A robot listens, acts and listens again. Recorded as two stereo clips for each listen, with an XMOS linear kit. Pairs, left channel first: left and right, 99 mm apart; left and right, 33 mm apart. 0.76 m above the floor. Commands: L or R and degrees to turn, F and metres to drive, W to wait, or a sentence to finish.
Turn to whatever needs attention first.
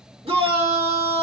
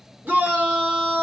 R60
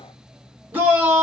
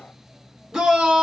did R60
R20
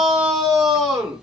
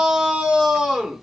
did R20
Facing the shout, 1 to 2 m away.